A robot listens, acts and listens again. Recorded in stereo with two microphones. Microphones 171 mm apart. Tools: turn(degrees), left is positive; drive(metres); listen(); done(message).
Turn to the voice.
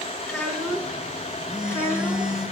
turn(degrees=-30)
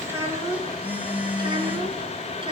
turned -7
turn(degrees=-35)
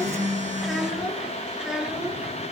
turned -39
done("Found it: a child speaking, straight ahead, 2 to 4 m away.")